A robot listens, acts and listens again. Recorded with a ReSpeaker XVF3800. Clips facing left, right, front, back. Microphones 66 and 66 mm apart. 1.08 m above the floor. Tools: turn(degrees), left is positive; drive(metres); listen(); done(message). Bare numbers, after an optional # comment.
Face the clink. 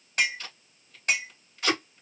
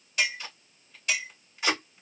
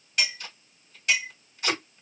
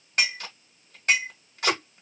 # The clink: 135° left.
turn(135)
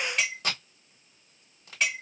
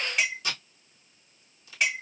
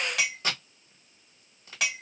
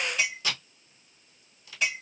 done("Facing the clink, 1 to 2 m away.")